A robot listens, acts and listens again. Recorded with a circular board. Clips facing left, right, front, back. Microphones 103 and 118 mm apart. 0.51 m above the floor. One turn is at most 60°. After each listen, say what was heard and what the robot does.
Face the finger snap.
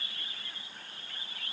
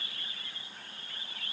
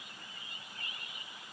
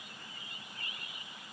Keep listening.
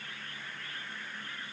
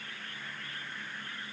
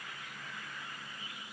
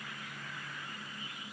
Keep listening.
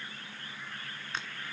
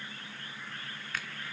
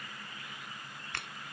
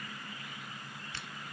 The finger snap: 25° left. Turn 25° left.
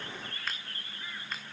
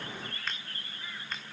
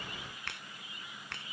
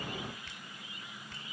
Facing the finger snap.